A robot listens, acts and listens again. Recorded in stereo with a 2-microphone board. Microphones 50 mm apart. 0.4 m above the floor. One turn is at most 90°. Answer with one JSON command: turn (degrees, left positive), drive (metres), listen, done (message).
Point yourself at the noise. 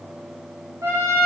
{"turn": -60}
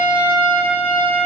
{"turn": -45}
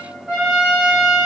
{"turn": -10}
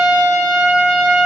{"done": "Facing the trumpet, under 1 m away."}